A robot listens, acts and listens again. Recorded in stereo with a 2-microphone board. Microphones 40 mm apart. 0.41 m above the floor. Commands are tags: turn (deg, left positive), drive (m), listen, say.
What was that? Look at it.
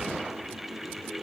<listen/>
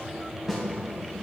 <turn deg="-30"/>
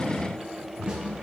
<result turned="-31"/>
<listen/>
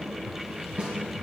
<turn deg="-145"/>
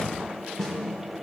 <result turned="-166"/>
<turn deg="20"/>
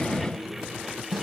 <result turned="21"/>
<say>Facing the snare drum, 2 to 4 m away.</say>